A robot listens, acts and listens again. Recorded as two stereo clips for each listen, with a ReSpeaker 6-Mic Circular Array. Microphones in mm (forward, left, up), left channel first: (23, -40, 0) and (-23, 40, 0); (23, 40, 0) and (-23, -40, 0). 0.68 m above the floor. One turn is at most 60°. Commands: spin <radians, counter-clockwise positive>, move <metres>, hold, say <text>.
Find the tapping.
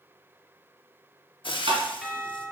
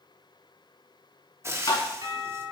spin 1.05
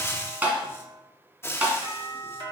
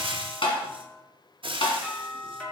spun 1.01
spin 0.87
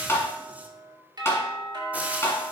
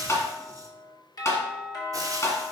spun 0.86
say Found it: tapping, straight ahead, 1 to 2 m away.